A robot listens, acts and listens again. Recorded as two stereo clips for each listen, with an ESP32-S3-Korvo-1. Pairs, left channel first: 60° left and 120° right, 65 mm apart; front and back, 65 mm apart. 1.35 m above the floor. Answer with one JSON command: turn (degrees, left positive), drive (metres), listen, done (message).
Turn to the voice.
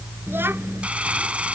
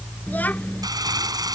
{"turn": -65}
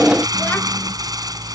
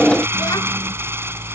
{"listen": true}
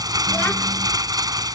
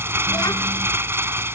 {"listen": true}
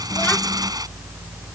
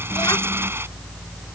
{"done": "I heard a child speaking from this way, but can't make it out now."}